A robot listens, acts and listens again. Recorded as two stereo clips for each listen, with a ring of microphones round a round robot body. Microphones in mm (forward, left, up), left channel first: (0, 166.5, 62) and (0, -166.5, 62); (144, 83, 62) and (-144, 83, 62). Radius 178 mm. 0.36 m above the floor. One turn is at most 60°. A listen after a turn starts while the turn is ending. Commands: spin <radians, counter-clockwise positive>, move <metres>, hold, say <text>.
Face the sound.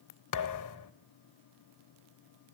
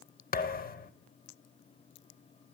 spin 1.05
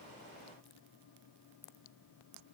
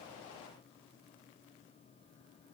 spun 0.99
say I heard a thud from this way, but can't make it out now.